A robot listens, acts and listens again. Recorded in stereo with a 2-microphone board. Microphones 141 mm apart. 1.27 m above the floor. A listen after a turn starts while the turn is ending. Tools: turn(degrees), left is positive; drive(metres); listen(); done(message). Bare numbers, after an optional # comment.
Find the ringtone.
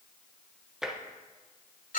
listen()
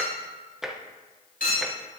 listen()
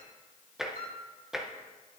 done("I can't make out a ringtone, only tapping and a clink.")